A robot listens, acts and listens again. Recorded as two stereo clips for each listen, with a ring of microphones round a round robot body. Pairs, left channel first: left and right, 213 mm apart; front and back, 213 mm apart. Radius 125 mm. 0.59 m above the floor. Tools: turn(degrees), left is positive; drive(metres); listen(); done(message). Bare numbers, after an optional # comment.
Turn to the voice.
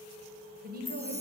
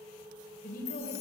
# The woman speaking: 50° right.
turn(-50)
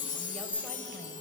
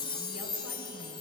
listen()
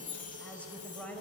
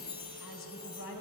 done("Found it: a woman speaking, straight ahead, 2 to 4 m away.")